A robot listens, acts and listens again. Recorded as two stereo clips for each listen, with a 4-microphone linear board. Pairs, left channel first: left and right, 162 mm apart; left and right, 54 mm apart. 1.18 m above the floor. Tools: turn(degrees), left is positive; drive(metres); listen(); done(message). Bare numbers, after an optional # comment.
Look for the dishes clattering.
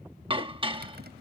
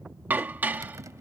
# The dishes clattering: about 35° right or 145° right.
turn(-35)
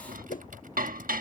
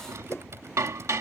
# So it is at 115° right.
turn(-115)
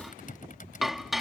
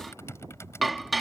done("Facing the dishes clattering.")